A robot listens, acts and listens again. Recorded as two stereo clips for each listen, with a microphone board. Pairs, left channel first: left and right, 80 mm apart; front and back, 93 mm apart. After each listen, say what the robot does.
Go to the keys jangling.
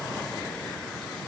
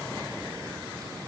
Keep listening.
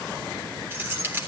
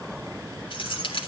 Turn 25° right.
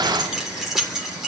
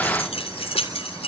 Drive 1.0 m forward.
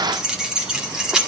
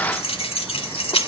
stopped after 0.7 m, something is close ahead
Turn 10° right.
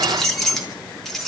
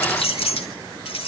Blocked. The keys jangling is further on, straight ahead.